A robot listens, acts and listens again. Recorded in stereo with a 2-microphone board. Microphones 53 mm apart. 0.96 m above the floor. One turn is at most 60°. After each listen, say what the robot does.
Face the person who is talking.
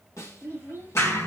Turn 45° left.
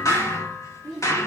Found it: a child speaking, straight ahead.